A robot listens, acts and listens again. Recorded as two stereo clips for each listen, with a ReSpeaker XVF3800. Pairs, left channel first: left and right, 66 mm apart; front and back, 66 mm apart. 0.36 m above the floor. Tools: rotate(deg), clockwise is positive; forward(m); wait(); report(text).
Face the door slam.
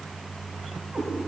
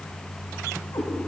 wait()
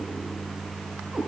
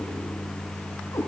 wait()
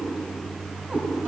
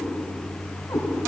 report("I can't make out a door slam to turn to.")